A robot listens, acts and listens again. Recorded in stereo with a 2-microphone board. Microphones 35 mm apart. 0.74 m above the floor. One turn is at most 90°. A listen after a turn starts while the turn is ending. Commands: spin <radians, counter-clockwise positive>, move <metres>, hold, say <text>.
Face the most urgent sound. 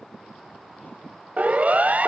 spin -0.87
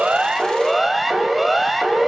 say Facing the siren.